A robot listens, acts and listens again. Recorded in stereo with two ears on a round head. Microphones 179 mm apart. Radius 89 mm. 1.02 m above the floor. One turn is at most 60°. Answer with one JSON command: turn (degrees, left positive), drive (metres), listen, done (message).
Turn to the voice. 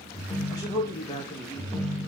{"turn": 15}
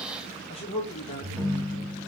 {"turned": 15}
{"turn": 60}
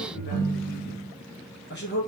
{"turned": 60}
{"turn": 60}
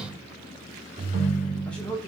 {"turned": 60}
{"done": "Found it: a man speaking, straight ahead."}